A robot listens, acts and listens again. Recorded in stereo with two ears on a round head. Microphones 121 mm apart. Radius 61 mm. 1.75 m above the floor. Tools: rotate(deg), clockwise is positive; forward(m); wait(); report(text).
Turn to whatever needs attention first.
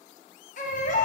rotate(-60)
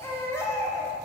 rotate(-20)
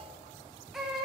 report("Facing the baby crying, under 1 m away.")